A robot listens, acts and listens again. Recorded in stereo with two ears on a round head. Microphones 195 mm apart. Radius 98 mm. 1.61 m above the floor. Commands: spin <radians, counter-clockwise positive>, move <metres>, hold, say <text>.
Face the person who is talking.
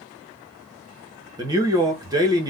spin -0.35
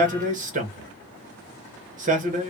spin -2.44
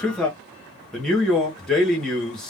say Found it: a man speaking, straight ahead, 1 to 2 m away.